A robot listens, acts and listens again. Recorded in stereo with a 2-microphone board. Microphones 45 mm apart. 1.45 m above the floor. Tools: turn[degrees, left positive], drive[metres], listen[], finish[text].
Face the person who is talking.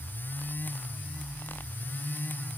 Action: listen[]
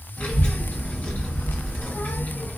Thought: The child speaking: about 55° left or 125° left.
Action: turn[55]
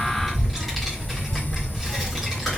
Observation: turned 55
Action: finish[Facing the child speaking, 1 to 2 m away.]